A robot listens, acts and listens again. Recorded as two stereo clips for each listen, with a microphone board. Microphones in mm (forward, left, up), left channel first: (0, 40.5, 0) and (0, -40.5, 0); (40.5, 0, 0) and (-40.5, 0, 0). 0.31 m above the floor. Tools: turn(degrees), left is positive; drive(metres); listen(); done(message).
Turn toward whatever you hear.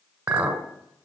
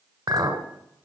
turn(degrees=-150)
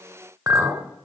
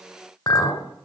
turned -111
turn(degrees=-40)
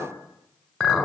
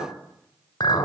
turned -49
turn(degrees=10)
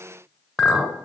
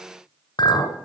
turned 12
done("Facing the clink, 1 to 2 m away.")